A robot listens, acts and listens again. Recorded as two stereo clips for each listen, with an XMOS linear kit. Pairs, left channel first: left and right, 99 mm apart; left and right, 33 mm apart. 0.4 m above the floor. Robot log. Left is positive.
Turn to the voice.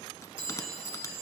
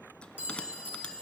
cmd idle
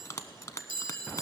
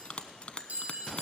cmd idle
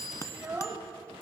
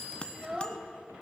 note: The child speaking: about 20° right or 160° right.
cmd yaw -20
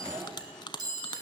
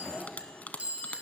cmd idle
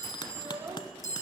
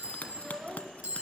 note: So it is at 135° right.
cmd yaw -135
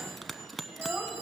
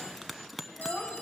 note: The child speaking is now 10° right.
cmd yaw -10
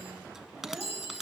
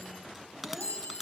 cmd idle
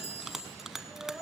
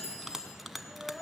end: Facing the child speaking, 1 to 2 m away.